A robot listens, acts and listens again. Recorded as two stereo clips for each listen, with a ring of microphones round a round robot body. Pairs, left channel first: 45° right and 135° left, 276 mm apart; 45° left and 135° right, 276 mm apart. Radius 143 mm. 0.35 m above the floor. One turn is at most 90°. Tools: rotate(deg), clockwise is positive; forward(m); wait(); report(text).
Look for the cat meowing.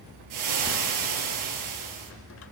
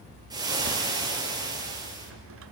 wait()
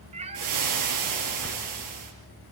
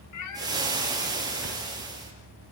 rotate(-65)
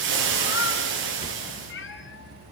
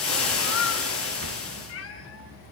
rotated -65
report("Found it: a cat meowing, straight ahead, 2 to 4 m away.")